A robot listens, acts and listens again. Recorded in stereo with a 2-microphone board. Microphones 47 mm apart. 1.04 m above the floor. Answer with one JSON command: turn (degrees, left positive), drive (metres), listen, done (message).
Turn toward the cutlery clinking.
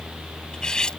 {"turn": 15}
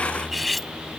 {"done": "Found it: cutlery clinking, straight ahead."}